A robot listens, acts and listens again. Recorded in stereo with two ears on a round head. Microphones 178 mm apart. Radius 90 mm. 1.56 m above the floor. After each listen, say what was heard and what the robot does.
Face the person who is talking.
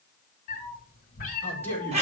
Turn 30° left.
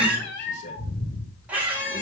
Keep listening.
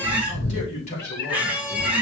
So it is at 140° left. Turn 140° left.
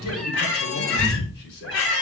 Keep listening.
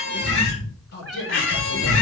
The man speaking is now 55° left. Turn 55° left.
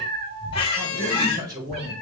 The man speaking is now 20° right. Turn 20° right.
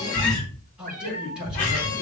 Facing the man speaking.